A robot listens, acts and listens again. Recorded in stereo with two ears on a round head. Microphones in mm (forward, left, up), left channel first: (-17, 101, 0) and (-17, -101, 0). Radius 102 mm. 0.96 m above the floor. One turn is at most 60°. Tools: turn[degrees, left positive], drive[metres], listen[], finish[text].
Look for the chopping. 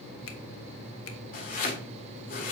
Thought: The chopping: about 40° left or 140° left.
Action: turn[40]
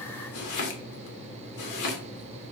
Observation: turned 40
Thought: So it is at 100° left.
Action: turn[60]
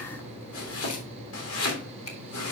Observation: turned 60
Thought: The chopping is now 65° left.
Action: turn[60]
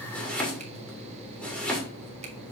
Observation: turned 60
Action: finish[Found it: chopping, straight ahead.]